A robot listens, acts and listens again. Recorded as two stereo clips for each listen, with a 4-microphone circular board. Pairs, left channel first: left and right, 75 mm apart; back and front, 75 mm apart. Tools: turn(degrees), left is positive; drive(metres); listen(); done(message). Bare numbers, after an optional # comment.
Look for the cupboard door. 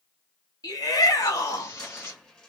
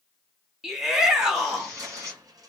# The cupboard door: 15° left.
turn(15)
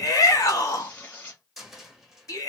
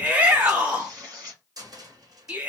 done("Facing the cupboard door.")